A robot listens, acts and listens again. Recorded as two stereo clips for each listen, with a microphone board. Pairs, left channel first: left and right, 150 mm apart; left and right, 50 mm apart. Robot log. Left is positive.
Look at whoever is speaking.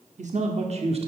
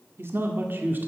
note: The man speaking: about 40° right or 140° right.
cmd yaw -40
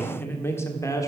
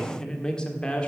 note: So it is at 20° left.
cmd yaw +20
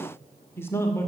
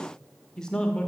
note: The man speaking is now 20° left.
cmd yaw +20
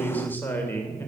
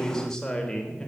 note: The man speaking is now 15° left.
cmd yaw +15
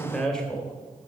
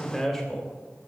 end: Facing the man speaking.